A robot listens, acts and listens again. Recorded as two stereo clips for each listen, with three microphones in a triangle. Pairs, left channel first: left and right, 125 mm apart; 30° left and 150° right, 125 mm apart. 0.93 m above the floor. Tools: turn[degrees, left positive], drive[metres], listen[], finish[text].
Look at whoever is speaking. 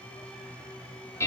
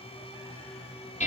Action: listen[]
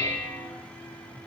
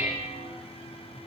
Action: listen[]
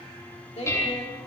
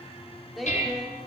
Thought: The woman speaking: 120° left.
Action: turn[120]
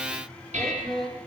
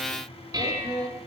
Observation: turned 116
Action: finish[Found it: a woman speaking, straight ahead.]